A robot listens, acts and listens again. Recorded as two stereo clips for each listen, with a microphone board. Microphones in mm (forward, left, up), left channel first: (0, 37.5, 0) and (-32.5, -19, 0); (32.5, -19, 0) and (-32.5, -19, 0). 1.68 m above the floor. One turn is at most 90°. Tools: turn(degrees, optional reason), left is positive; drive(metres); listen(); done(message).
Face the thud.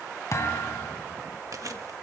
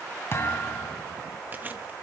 turn(degrees=35, reason="The thud: 35° left.")
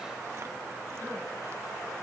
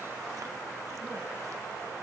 done("Facing where the thud came from. I can't hear it now.")